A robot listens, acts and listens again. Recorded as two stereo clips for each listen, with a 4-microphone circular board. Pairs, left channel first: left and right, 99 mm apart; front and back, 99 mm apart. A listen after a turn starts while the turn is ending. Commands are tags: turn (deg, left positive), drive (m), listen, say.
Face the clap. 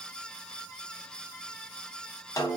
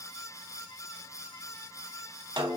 <listen/>
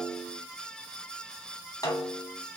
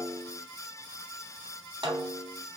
<listen/>
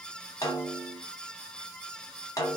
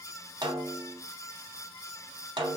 <say>I can't make out a clap to turn to.</say>